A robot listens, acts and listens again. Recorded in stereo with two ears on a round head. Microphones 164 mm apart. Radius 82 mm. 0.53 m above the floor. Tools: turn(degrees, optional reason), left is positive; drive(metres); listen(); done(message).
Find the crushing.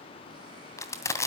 turn(degrees=15, reason="The crushing: about 15° left or 165° left.")
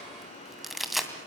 done("Found it: crushing, straight ahead, 2 to 4 m away.")